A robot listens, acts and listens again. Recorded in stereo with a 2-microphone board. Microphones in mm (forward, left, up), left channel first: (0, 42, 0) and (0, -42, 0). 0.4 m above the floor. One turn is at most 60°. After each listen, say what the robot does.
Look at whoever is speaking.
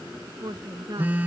Turn 60° right.
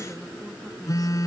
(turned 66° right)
Keep listening.
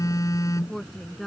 Facing the woman speaking.